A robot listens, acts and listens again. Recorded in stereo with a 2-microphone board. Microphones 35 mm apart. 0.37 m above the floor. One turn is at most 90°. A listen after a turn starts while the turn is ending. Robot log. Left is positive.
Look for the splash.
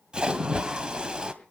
note: The splash: about 30° right or 150° right.
cmd yaw -30
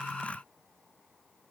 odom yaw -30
cmd idle
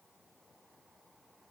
end: I heard a splash, but can't make it out now. It was about straight ahead or 120° right.